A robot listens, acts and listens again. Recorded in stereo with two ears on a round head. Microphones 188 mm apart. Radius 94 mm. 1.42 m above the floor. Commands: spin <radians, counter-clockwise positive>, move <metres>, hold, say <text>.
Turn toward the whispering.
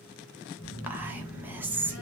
spin -0.52
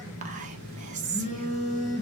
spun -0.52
spin -2.44
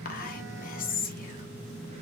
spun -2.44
spin 0.79
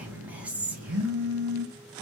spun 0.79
say Facing the whispering.